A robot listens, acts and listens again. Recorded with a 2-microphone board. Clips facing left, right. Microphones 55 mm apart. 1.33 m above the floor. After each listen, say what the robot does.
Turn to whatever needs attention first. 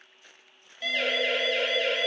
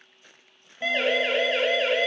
Turn 25° right.
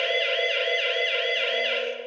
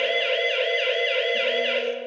Found it: a siren, straight ahead.